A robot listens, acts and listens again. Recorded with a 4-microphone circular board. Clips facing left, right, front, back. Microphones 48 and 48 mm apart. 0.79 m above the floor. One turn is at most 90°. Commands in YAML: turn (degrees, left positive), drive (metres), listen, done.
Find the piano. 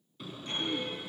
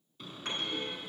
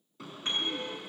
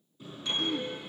turn: -60
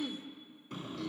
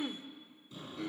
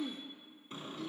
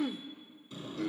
listen: true
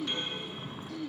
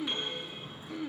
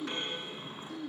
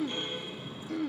listen: true
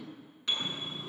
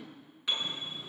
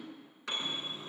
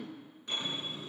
done: "Found it: a piano, straight ahead."